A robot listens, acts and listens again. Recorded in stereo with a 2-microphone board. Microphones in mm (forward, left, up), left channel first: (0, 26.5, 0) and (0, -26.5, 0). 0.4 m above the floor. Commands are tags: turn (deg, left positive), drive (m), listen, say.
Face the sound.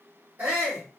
<turn deg="-30"/>
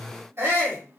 <turn deg="-110"/>
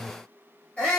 <turn deg="25"/>
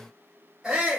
<turn deg="-15"/>
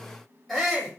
<say>Found it: a shout, straight ahead.</say>